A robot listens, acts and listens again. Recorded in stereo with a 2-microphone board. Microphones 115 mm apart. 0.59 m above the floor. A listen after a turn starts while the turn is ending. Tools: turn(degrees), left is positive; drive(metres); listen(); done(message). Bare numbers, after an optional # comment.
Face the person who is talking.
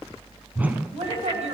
# The woman speaking: about 70° right or 110° right.
turn(-70)
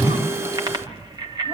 listen()
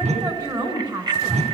# So it is at 35° right.
turn(-35)
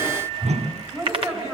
# The woman speaking is now 25° right.
turn(-25)
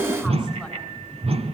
listen()
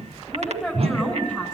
done("Facing the woman speaking.")